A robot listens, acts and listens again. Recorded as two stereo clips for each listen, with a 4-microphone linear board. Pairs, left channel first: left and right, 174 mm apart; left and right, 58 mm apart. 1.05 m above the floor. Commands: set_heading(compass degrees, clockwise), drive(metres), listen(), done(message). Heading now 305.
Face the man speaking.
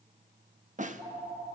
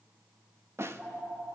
listen()
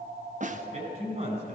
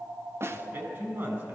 set_heading(350)
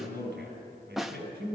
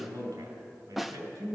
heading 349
set_heading(79)
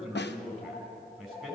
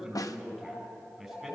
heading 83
done("Found it: a man speaking, straight ahead, over 4 m away.")